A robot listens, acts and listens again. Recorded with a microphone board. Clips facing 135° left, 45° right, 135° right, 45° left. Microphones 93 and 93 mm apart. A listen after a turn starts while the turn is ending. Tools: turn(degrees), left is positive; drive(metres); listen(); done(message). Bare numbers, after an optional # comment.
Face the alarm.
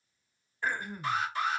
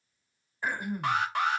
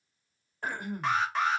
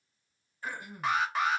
# The alarm: 40° right.
turn(-40)
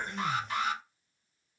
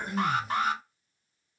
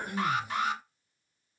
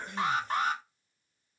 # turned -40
done("Found it: an alarm, straight ahead, under 1 m away.")